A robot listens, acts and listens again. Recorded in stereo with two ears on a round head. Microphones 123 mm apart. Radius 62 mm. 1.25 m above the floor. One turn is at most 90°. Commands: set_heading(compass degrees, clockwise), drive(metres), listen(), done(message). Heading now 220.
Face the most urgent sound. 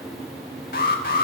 set_heading(145)
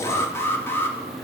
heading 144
set_heading(129)
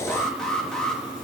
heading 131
done("Found it: an alarm, straight ahead.")